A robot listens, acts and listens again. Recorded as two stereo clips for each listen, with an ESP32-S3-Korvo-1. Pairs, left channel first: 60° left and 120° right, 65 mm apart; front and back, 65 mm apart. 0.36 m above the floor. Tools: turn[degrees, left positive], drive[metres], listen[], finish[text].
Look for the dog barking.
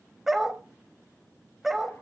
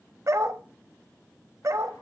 Thought: The dog barking: 155° left.
Action: turn[155]
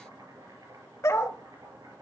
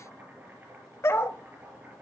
Thought: The dog barking is now 35° left.
Action: turn[35]
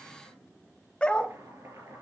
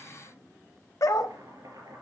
Thought: The dog barking is now 10° right.
Action: turn[-10]
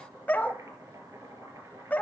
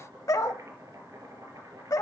Action: finish[Facing the dog barking.]